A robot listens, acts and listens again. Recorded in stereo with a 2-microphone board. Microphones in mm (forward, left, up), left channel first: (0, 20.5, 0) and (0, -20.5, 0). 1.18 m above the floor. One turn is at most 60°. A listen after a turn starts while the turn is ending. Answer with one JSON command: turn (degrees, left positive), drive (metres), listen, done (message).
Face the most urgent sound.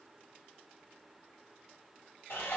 {"listen": true}
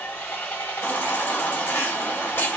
{"turn": 60}
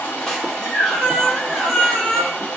{"turn": 10}
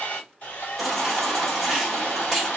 {"done": "Found it: a baby crying, straight ahead."}